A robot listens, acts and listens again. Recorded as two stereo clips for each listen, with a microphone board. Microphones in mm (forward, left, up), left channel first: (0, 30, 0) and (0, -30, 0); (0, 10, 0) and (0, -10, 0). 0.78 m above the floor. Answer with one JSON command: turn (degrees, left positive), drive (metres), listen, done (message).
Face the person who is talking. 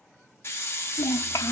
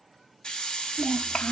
{"turn": 65}
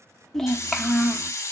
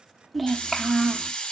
{"done": "Facing the child speaking, under 1 m away."}